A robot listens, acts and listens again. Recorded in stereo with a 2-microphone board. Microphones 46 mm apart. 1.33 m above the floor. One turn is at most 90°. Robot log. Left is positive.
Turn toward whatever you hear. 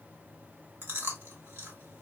note: The chewing: about 50° right or 130° right.
cmd yaw -50
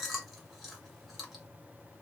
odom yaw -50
end: Facing the chewing.